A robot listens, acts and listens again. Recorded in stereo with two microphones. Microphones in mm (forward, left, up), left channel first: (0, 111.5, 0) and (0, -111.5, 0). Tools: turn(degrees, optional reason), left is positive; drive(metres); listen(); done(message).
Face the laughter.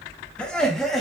turn(degrees=30)
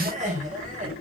turn(degrees=-35, reason="So it is at 35° right.")
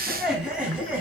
done("Facing the laughter.")